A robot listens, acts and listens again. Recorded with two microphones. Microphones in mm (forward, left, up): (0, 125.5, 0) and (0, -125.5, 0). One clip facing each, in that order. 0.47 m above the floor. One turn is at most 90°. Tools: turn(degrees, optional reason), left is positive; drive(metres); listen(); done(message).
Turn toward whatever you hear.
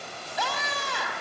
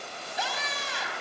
turn(degrees=65, reason="The scream: about 65° left or 115° left.")
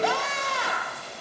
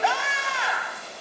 turn(degrees=45, reason="So it is at 45° left.")
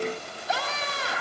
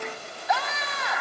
turn(degrees=35, reason="The scream is now 35° left.")
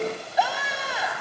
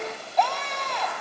turn(degrees=10, reason="The scream is now 10° left.")
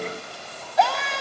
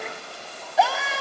done("Found it: a scream, straight ahead, 2 to 4 m away.")